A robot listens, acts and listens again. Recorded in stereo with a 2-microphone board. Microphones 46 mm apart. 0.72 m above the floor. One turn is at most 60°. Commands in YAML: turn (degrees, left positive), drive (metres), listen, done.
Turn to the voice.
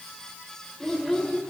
turn: 30
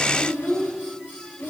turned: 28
turn: 60
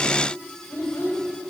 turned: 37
turn: 60
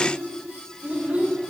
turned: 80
turn: -25
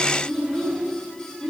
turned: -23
done: "Found it: a child speaking, straight ahead, 2 to 4 m away."